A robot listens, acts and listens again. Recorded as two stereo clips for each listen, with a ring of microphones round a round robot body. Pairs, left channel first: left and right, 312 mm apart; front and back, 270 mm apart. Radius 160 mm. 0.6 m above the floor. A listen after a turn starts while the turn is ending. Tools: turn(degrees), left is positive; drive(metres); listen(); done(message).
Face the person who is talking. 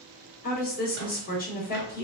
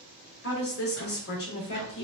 turn(degrees=30)
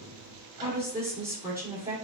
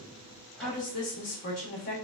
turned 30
turn(degrees=-10)
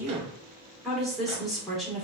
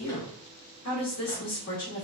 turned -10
done("Facing the woman speaking, 1 to 2 m away.")